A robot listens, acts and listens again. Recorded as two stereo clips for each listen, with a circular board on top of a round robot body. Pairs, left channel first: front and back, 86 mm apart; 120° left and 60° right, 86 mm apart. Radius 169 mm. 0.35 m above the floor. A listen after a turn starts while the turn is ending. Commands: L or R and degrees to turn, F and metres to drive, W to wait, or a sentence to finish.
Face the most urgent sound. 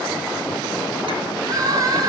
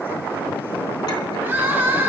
R130
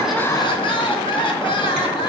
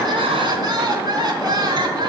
R20
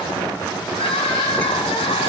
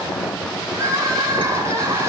Facing the crying.